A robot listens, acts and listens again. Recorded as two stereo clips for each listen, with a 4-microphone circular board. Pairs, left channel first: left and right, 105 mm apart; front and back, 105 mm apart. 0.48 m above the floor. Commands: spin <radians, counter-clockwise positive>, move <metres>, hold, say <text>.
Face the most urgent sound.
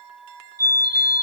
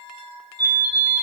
spin -2.44
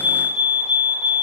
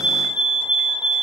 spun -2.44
spin -0.17
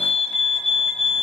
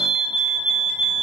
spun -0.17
say Facing the fire alarm.